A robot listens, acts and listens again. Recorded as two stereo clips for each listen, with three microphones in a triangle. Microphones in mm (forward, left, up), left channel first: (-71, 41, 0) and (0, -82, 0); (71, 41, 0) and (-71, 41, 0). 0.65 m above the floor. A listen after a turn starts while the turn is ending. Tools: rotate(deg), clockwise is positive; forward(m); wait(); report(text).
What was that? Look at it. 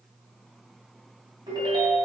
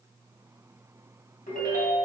report("Found it: a ringtone, straight ahead, 2 to 4 m away.")